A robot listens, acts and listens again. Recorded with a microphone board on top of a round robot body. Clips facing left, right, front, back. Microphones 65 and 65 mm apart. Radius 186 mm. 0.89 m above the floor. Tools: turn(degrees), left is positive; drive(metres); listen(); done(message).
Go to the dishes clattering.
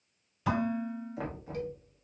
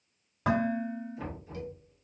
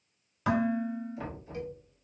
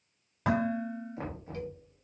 turn(degrees=-130)
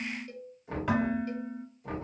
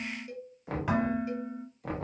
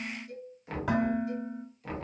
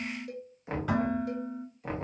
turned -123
drive(metres=1.0)
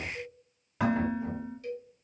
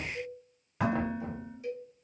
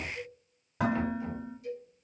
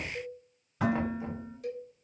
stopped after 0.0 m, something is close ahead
done("Something is in my way. I am facing the dishes clattering but have not reached it.")